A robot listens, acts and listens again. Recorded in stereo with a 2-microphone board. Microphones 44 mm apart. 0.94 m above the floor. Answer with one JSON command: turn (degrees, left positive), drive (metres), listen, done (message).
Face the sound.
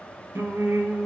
{"turn": -55}
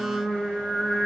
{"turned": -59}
{"done": "Found it: singing, straight ahead, 1 to 2 m away."}